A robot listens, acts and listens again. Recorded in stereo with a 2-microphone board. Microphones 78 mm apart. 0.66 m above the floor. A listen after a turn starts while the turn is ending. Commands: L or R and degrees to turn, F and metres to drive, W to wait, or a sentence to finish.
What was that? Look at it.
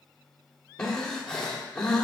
L30
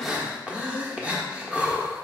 R15
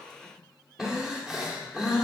Found it: breathing, straight ahead, 1 to 2 m away.